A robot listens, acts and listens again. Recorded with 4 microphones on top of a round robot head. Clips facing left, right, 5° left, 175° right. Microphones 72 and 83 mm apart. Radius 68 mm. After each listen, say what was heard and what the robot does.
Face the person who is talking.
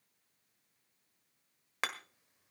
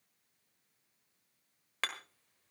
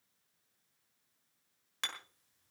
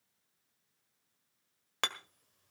Keep listening.
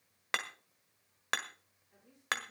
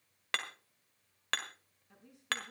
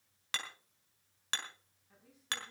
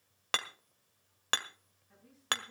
The woman speaking: 80° right. Turn 80° right.
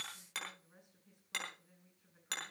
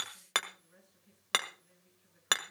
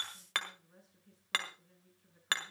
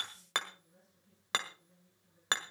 The woman speaking is now 15° left. Turn 15° left.
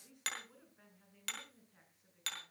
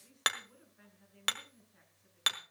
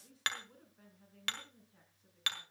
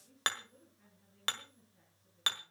Facing the woman speaking.